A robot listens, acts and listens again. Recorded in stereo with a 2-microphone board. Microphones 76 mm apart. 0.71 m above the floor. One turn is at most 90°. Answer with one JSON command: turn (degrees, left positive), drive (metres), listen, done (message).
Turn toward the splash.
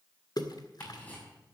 {"turn": 60}
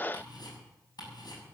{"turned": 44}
{"listen": true}
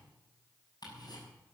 {"done": "I heard a splash, but can't make it out now. It was about 20° left or 75° left."}